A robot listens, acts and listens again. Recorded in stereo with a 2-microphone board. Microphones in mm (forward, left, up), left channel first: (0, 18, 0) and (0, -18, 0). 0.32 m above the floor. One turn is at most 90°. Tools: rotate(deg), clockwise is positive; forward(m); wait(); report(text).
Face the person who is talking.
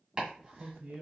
rotate(50)
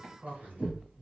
rotate(75)
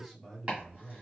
report("Facing the man speaking.")